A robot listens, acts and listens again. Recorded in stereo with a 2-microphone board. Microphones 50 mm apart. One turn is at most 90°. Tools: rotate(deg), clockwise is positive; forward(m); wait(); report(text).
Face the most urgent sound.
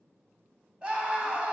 rotate(20)
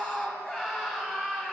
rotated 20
report("Facing the scream.")